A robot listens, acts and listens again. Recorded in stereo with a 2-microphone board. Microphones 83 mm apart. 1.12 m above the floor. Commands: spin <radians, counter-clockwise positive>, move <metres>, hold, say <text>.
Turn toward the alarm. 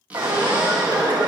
spin -0.96
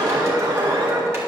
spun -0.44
spin -1.75
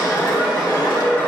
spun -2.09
spin 0.35
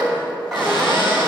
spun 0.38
say Facing the alarm, 1 to 2 m away.